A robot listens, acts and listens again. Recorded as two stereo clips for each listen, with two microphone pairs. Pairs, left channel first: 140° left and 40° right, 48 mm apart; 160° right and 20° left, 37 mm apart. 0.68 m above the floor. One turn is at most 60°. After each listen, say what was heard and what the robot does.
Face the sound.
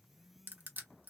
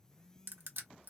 The crushing: 10° left. Turn 10° left.
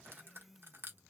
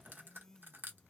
Facing the crushing, under 1 m away.